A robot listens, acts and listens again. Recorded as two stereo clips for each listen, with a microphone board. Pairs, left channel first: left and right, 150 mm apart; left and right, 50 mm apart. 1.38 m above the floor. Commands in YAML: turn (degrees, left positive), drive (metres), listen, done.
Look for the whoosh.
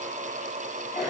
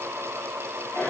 listen: true
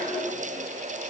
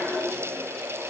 listen: true
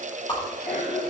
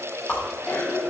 turn: 30
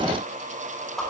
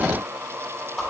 done: "Found it: a whoosh, straight ahead."